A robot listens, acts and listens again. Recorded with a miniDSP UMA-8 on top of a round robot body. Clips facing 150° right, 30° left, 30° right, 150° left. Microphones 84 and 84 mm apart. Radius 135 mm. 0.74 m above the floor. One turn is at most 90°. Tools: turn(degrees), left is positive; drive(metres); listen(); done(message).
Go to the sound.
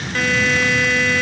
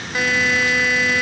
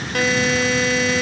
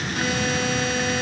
turn(degrees=-50)
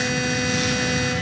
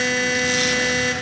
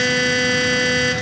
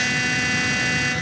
drive(metres=1.0)
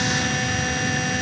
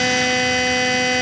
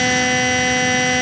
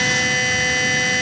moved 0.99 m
turn(degrees=10)
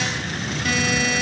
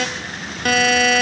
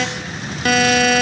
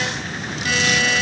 drive(metres=1.0)
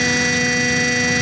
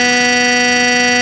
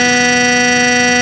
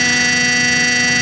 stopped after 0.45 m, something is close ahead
done("Arrived at the buzzer, straight ahead.")